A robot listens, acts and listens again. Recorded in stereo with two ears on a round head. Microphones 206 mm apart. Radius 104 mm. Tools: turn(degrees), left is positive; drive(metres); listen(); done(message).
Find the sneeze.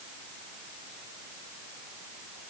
listen()
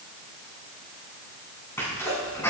turn(degrees=30)
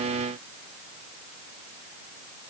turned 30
listen()
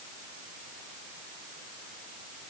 done("I heard a sneeze, but can't make it out now. It was about 20° right or 140° left.")